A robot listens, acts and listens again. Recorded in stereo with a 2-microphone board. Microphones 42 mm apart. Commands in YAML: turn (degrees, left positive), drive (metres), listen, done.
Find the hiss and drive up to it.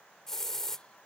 turn: 30
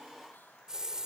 turn: -20
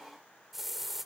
drive: 1.0
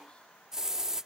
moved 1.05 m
turn: -15
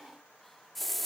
drive: 1.0
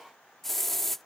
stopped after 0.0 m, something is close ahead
done: "I am next to the hiss."